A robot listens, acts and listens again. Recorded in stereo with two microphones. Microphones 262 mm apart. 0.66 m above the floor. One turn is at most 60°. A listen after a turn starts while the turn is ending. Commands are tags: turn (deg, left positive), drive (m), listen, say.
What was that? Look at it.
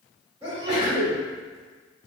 <turn deg="-20"/>
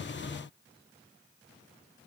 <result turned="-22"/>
<listen/>
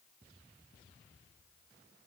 <say>I heard a sneeze, but can't make it out now. It was about straight ahead or 135° right.</say>